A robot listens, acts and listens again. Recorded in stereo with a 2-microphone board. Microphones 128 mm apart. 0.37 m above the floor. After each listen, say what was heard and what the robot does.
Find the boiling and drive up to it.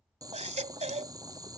The boiling: about 30° right or 150° right. Turn 30° right.
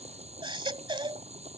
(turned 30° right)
So it is at 125° right. Turn 125° right.
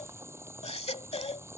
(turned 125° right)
The boiling is now 20° right. Turn 20° right.
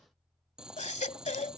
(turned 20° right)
Drive 1.0 m forward.
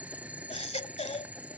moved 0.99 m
The boiling is now 10° right. Turn 10° right.
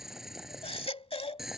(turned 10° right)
Drive 1.0 m forward.
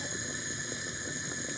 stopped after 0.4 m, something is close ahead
Arrived at the boiling, straight ahead.